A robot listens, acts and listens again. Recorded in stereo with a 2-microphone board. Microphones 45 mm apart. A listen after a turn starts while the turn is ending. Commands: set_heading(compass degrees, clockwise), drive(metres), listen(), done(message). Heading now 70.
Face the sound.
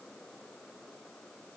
listen()
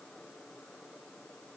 listen()
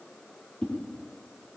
set_heading(45)
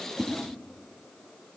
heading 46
done("Found it: a whoosh, straight ahead.")